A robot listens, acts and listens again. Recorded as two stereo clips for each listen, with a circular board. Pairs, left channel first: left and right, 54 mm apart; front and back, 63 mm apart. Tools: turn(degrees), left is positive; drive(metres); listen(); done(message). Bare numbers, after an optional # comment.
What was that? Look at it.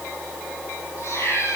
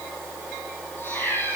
# The cat meowing: 55° left.
turn(55)
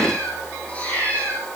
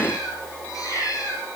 # The cat meowing is now 25° left.
turn(25)
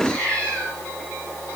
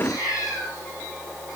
# The cat meowing is now 20° left.
turn(20)
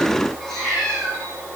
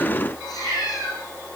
# The cat meowing is now 10° left.
turn(10)
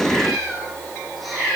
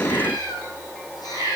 done("Facing the cat meowing, over 4 m away.")